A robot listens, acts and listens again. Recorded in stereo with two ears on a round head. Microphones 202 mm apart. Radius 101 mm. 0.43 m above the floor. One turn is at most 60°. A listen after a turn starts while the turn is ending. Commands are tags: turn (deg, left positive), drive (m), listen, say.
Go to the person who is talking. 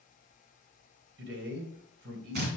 <turn deg="-60"/>
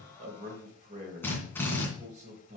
<turn deg="-40"/>
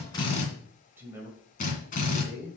<turn deg="-15"/>
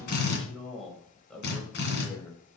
<drive m="1.0"/>
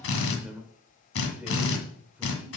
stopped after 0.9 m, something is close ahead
<turn deg="-10"/>
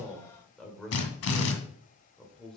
<say>Arrived at the man speaking, straight ahead.</say>